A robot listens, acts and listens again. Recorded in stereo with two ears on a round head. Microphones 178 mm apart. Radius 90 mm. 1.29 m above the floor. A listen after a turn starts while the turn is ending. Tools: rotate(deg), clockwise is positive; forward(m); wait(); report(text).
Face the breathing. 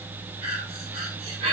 rotate(30)
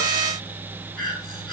report("Facing the breathing.")